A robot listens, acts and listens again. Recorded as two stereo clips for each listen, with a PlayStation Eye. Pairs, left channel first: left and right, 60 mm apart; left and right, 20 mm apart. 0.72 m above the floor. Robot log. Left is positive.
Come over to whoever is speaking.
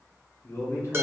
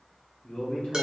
note: The man speaking: about 50° left or 130° left.
cmd yaw +50
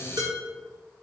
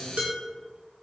cmd idle
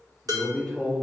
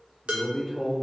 note: So it is at 10° left.
cmd yaw +10
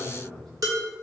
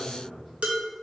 cmd fwd 1.0
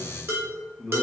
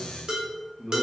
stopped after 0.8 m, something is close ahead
end: Arrived at the man speaking, straight ahead.